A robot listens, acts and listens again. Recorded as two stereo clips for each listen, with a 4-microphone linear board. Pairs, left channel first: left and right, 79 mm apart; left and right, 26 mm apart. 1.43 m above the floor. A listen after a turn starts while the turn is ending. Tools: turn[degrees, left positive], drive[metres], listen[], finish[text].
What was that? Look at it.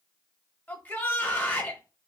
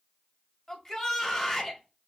Thought: The shout: about 25° left or 155° left.
Action: turn[25]
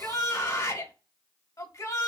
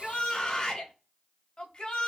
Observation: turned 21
Thought: So it is at 135° left.
Action: turn[135]
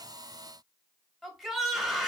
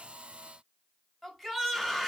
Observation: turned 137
Action: finish[Found it: a shout, straight ahead.]